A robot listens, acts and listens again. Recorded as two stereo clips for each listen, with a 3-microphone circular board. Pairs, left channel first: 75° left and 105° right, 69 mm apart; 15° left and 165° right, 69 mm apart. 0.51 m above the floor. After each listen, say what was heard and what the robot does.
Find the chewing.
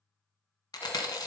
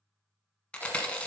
The chewing: 90° left. Turn 90° left.
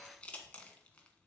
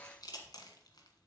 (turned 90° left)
Found it: chewing, straight ahead.